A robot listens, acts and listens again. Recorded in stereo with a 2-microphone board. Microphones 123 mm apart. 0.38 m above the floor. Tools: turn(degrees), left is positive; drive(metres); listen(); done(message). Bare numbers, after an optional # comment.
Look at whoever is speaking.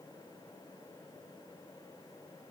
listen()
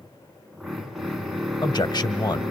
# The man speaking: about 35° left or 145° left.
turn(35)
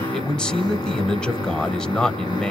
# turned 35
done("Facing the man speaking, 1 to 2 m away.")